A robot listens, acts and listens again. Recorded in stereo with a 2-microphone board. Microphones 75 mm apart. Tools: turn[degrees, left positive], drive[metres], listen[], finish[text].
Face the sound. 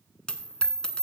Action: turn[30]
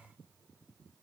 Action: listen[]
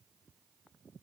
Action: finish[I heard a dropped coin, but can't make it out now. It was about 20° right or 140° left.]